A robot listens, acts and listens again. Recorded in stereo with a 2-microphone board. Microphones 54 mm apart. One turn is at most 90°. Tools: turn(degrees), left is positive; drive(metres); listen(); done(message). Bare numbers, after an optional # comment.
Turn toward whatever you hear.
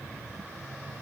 listen()
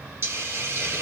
# The hiss: about 45° right or 135° right.
turn(-45)
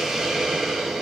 done("Found it: a hiss, straight ahead, under 1 m away.")